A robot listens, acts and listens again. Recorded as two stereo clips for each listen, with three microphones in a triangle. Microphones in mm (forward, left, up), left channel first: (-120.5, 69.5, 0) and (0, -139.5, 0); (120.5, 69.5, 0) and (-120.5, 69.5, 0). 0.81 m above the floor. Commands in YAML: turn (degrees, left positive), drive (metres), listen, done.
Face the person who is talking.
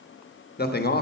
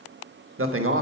turn: 165
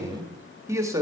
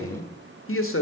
turn: 15
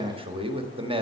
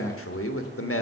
done: "Found it: a man speaking, straight ahead."